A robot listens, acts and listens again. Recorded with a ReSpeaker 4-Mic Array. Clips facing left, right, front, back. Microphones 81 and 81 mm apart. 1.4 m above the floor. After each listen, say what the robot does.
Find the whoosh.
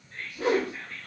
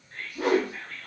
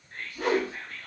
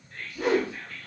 Turn 90° right.
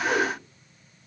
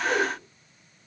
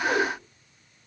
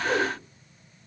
Facing the whoosh, 1 to 2 m away.